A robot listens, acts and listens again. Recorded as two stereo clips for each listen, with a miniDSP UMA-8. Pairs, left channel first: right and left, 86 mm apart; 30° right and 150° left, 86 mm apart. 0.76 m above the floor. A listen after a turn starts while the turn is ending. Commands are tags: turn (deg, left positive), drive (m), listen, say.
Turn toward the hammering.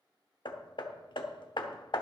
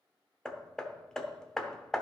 <turn deg="-115"/>
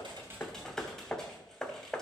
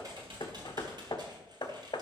<turn deg="-10"/>
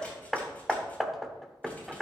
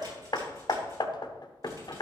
<say>Found it: hammering, straight ahead.</say>